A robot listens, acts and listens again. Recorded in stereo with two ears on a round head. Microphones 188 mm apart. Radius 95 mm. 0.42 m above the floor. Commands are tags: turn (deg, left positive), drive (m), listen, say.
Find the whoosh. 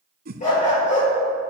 <turn deg="-45"/>
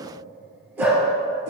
<listen/>
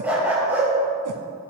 <listen/>
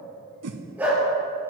<turn deg="-90"/>
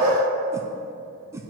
<turn deg="-15"/>
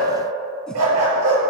<listen/>
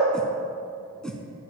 <say>Found it: a whoosh, straight ahead, under 1 m away.</say>